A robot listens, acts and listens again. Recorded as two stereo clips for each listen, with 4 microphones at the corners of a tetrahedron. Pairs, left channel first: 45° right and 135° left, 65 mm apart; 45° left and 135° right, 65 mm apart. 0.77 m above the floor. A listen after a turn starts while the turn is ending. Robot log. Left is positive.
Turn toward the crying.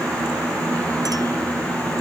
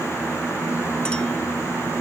cmd idle
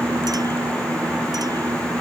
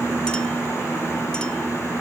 cmd idle
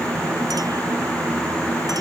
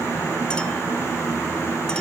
end: I can't make out crying to turn to.